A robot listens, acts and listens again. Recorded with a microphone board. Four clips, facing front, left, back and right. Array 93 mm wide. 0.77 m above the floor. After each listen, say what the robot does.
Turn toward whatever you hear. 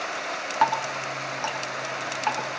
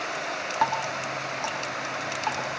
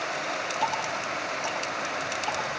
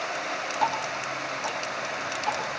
Turn 25° left.
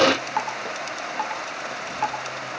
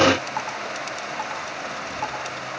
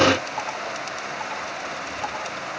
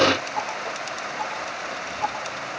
Turn 20° left.
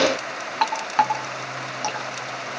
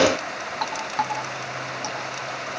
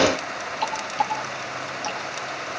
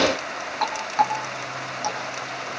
Found it: dripping, straight ahead, 2 to 4 m away.